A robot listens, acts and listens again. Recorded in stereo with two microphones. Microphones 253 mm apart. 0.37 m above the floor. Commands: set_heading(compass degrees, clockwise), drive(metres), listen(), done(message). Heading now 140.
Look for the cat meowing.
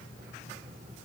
listen()
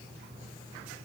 listen()
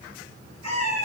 set_heading(50)
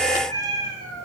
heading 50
set_heading(35)
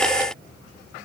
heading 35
listen()
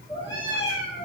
set_heading(20)
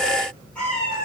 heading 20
done("Found it: a cat meowing, straight ahead, 2 to 4 m away.")